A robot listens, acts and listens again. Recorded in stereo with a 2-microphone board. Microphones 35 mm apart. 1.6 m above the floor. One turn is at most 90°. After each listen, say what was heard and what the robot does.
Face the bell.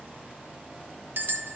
Turn 90° right.
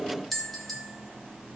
Found it: a bell, straight ahead.